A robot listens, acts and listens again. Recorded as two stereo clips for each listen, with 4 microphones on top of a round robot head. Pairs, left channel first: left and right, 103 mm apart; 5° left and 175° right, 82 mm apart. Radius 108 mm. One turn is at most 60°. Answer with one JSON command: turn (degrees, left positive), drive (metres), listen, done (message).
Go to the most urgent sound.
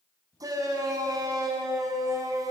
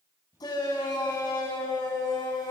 {"turn": -35}
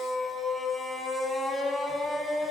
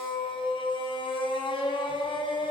{"drive": 1.0}
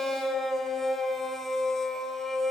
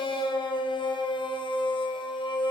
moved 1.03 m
{"drive": 1.0}
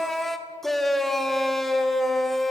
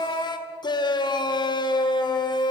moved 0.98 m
{"drive": 1.0}
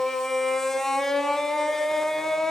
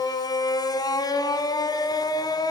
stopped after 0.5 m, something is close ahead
{"done": "I am next to the shout."}